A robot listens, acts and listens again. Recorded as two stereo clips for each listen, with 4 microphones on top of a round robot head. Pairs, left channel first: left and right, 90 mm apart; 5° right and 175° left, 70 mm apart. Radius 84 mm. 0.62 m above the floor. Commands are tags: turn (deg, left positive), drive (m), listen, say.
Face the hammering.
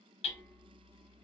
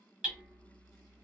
<turn deg="100"/>
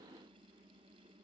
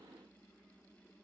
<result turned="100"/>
<listen/>
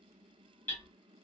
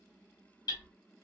<turn deg="20"/>
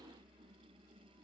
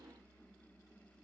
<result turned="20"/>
<listen/>
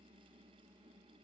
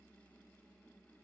<listen/>
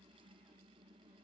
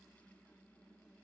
<say>I heard hammering from this way, but can't make it out now.</say>